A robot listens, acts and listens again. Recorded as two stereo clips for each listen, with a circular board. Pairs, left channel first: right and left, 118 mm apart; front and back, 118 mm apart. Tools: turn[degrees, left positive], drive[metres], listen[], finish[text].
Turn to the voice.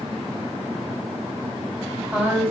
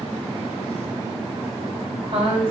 Thought: The woman speaking: 160° left.
Action: turn[160]
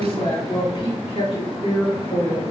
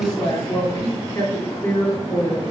Thought: The woman speaking is now 65° right.
Action: turn[-65]
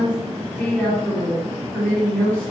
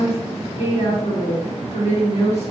Action: finish[Facing the woman speaking.]